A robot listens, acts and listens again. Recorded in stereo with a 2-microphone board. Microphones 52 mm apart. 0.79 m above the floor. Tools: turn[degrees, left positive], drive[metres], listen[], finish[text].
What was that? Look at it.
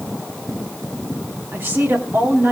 Thought: The woman speaking: about 50° right or 130° right.
Action: turn[-50]
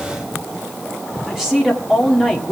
Thought: So it is at 15° right.
Action: turn[-15]
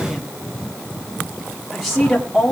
Action: finish[Facing the woman speaking.]